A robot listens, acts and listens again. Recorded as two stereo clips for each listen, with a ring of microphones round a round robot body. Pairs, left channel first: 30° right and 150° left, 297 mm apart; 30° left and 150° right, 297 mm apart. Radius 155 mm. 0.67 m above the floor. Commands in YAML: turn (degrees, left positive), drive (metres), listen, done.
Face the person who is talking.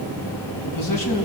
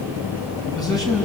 turn: -50
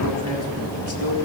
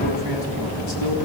turn: 10
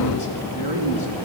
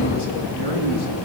done: "Found it: a man speaking, straight ahead, over 4 m away."